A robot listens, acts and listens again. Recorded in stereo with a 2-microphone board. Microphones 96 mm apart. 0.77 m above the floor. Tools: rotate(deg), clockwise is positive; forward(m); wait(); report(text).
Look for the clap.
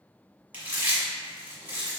wait()
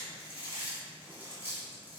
wait()
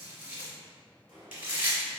rotate(65)
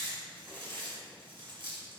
wait()
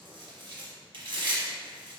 wait()
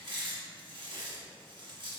report("I heard a clap, but can't make it out now. It was about straight ahead or 50° right.")